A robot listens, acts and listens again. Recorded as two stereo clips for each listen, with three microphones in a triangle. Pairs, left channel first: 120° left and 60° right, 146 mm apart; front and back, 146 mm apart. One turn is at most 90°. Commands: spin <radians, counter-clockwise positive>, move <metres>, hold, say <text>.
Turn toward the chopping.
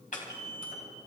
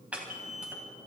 spin 1.57
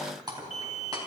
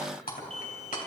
say Found it: chopping, straight ahead.